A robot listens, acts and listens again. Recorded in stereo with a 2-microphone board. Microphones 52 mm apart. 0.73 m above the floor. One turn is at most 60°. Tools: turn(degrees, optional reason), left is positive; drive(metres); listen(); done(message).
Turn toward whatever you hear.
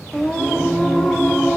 turn(degrees=30)
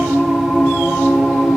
done("Facing the singing.")